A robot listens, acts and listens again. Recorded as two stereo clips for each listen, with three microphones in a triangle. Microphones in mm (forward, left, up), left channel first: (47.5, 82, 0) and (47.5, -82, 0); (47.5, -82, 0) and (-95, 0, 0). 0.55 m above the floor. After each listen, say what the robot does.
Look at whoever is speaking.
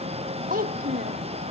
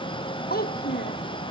Turn 55° right.
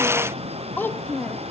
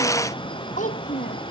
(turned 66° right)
Turn 10° left.
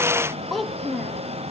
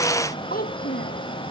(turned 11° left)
Found it: a child speaking, straight ahead.